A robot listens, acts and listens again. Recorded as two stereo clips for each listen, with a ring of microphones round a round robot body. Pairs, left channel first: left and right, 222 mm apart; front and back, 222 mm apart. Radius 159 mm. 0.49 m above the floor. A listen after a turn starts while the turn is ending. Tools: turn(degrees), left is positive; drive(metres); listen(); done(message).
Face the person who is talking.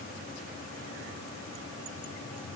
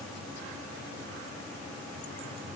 listen()
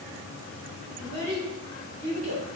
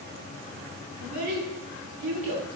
turn(degrees=-155)
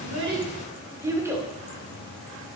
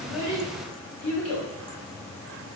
turn(degrees=-10)
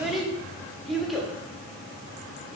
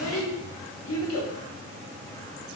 done("Found it: a child speaking, straight ahead.")